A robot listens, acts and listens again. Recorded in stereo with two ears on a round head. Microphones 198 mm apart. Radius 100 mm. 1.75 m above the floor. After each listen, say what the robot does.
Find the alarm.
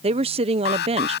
Turn 50° left.
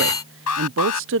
Turn 75° left.
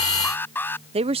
Turn 10° left.
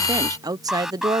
Found it: an alarm, straight ahead.